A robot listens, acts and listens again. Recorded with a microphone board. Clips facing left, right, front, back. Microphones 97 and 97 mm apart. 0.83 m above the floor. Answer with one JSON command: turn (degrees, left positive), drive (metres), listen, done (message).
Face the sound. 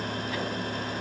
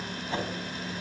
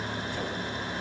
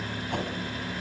{"turn": -150}
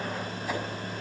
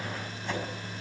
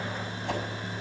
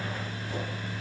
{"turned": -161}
{"turn": 10}
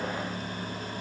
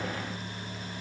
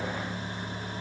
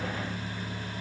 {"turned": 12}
{"listen": true}
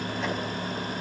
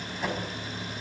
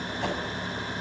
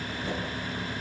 {"done": "Found it: a whoosh, straight ahead."}